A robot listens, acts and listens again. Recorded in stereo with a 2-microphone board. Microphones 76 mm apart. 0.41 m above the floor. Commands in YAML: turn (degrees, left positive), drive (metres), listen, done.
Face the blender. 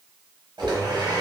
turn: -90
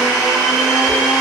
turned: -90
turn: -10
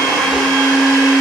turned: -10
done: "Facing the blender."